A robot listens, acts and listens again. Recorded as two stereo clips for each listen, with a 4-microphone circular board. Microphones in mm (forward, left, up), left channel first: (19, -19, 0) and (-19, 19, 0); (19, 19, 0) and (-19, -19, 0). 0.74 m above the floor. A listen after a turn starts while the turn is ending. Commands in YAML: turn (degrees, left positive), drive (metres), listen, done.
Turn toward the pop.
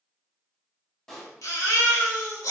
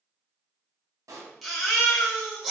turn: -125
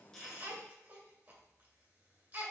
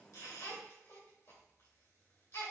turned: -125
done: "I heard a pop from this way, but can't make it out now."